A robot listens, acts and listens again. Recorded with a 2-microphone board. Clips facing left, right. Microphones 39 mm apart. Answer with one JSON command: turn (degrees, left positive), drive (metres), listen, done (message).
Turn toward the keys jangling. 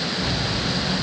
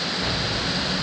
{"turn": -30}
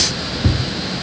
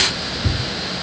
{"turn": 35}
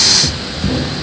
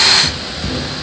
{"turn": 20}
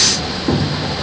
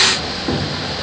{"turn": 10}
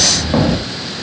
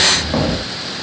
{"done": "Facing the keys jangling, 1 to 2 m away."}